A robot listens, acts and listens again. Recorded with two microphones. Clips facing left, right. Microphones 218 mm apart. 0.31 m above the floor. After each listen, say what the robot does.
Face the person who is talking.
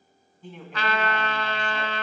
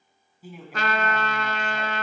Turn 30° right.
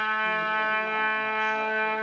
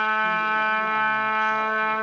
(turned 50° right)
Keep listening.
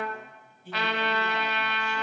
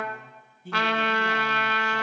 Turn 125° right.
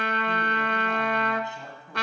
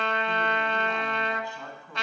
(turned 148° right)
Turn 25° left.
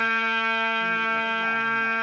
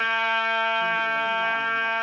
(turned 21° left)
Keep listening.
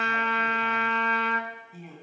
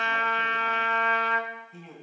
Facing the man speaking, 2 to 4 m away.